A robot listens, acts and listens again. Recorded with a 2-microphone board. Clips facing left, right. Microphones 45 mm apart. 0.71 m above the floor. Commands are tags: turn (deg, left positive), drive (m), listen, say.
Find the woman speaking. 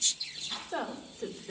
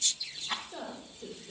<turn deg="65"/>
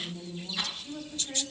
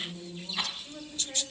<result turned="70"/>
<turn deg="-10"/>
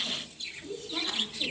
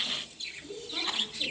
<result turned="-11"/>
<say>Found it: a woman speaking, straight ahead, over 4 m away.</say>